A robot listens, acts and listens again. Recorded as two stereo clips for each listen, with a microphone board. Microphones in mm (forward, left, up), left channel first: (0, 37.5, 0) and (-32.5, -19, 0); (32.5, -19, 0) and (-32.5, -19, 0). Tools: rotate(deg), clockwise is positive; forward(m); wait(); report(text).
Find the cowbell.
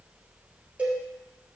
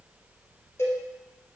rotate(50)
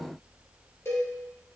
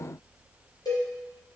rotate(-10)
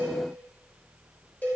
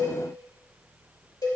report("Found it: a cowbell, straight ahead.")